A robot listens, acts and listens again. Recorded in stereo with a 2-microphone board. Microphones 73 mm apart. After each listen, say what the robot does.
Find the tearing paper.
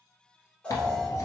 Turn 45° left.
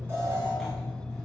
Keep listening.
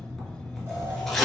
Facing the tearing paper.